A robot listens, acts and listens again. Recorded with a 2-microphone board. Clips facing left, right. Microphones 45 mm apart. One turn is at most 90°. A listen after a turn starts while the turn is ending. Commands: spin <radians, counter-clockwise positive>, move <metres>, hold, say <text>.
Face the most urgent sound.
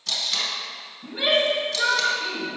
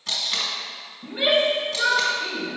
spin -0.26
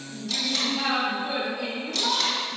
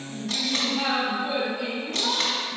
say Facing the shout.